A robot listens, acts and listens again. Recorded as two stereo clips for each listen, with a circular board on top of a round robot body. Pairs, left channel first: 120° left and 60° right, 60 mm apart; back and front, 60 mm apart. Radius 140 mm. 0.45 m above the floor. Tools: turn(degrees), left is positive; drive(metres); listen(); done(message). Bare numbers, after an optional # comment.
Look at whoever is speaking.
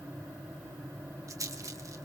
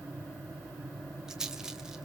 listen()
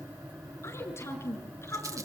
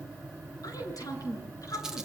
# The woman speaking: 160° left.
turn(160)
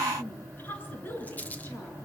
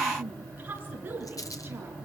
# The woman speaking is now 60° left.
turn(60)
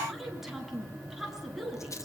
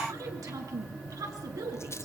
# The woman speaking is now 25° left.
turn(25)
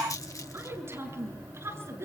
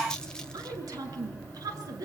# The woman speaking is now 15° right.
turn(-15)
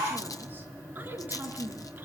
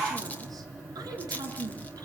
listen()
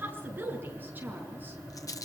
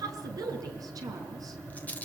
done("Facing the woman speaking, over 4 m away.")